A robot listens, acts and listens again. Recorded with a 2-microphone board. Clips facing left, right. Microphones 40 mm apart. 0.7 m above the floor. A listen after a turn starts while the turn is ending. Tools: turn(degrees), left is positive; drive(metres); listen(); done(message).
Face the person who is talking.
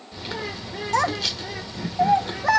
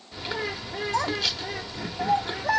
turn(degrees=75)
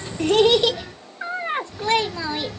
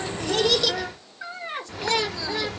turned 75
turn(degrees=30)
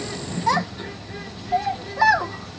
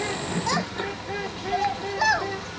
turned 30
turn(degrees=10)
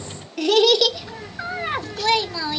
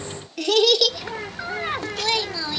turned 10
done("Facing the child speaking, under 1 m away.")